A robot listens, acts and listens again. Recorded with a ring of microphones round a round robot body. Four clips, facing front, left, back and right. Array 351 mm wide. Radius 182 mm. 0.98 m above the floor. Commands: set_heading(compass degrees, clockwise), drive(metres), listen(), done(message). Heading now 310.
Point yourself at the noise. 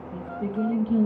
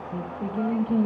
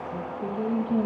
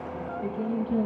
set_heading(255)
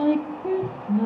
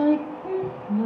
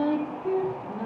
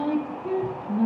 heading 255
done("Found it: singing, straight ahead.")